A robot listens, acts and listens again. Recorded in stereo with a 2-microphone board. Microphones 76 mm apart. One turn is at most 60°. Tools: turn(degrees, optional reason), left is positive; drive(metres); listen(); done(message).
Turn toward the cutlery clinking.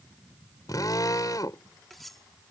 turn(degrees=30)
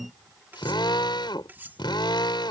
turn(degrees=-25, reason="So it is at 25° right.")
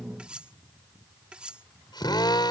turn(degrees=-10, reason="The cutlery clinking is now 10° right.")
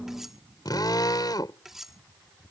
done("Facing the cutlery clinking.")